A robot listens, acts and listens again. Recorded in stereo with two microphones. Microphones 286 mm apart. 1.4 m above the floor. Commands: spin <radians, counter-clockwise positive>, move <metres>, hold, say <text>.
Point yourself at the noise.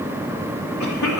spin 1.57
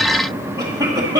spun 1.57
spin -0.26
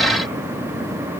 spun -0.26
hold
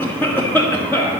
spin 0.17
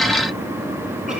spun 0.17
hold
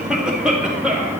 say Found it: a cough, straight ahead.